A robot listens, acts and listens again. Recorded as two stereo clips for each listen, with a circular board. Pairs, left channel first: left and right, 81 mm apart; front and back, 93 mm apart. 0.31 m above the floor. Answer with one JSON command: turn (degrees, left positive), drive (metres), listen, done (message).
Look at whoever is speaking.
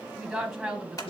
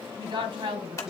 {"turn": 180}
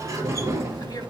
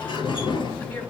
{"listen": true}
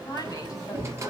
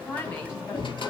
{"turn": 50}
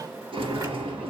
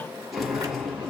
{"listen": true}
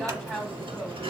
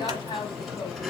{"done": "Found it: a woman speaking, straight ahead, 2 to 4 m away."}